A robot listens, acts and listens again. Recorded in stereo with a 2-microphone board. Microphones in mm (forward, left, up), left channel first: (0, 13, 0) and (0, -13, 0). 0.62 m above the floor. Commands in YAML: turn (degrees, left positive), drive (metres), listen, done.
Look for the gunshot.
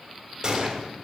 turn: -30
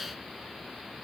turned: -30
listen: true
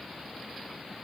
done: "I heard a gunshot, but can't make it out now. It was about straight ahead or 120° right."